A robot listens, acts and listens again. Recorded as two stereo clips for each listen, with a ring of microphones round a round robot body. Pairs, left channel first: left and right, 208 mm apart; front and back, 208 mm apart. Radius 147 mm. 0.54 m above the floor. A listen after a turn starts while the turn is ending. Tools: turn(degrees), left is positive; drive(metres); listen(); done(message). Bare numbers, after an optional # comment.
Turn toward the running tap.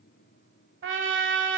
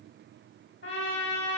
listen()
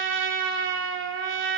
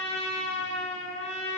listen()
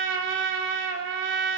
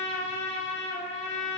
done("I can't make out a running tap to turn to.")